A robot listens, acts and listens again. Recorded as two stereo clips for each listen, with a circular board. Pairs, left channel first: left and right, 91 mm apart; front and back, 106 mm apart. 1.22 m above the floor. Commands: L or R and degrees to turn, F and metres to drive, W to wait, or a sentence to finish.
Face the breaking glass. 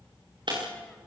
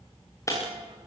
R60
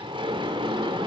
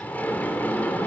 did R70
L10
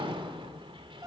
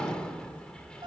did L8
Facing where the breaking glass came from. I can't hear it now.